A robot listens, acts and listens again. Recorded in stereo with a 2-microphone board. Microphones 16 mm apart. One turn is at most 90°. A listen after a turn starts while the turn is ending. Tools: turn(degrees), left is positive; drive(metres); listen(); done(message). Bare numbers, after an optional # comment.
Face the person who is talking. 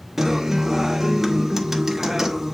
listen()
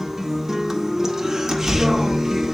# The child speaking: about 70° left or 110° left.
turn(70)
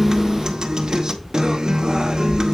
# So it is at 40° left.
turn(40)
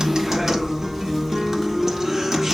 # The child speaking is now 10° right.
turn(-10)
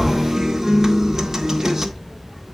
done("Found it: a child speaking, straight ahead, 2 to 4 m away.")